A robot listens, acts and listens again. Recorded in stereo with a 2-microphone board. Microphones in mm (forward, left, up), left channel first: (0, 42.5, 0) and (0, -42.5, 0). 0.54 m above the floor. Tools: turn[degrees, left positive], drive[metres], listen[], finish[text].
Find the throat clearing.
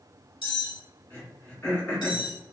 Thought: The throat clearing: about 20° left or 160° left.
Action: turn[20]
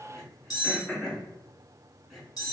Action: finish[Facing the throat clearing.]